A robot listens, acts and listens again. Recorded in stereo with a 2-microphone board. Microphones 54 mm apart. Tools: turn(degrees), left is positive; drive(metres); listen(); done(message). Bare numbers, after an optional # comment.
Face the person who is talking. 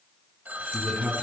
# The man speaking: about 25° right or 155° right.
turn(-25)
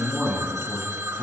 done("Facing the man speaking, over 4 m away.")